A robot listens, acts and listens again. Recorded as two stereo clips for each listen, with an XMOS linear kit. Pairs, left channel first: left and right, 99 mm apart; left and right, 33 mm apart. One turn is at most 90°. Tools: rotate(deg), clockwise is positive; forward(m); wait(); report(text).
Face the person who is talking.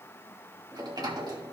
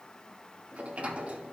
wait()
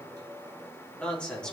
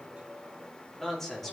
rotate(-30)
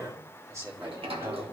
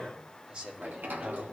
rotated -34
rotate(40)
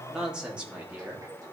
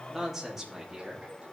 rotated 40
rotate(15)
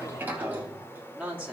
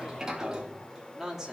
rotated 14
rotate(10)
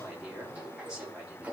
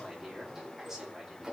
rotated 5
report("Facing the man speaking, 2 to 4 m away.")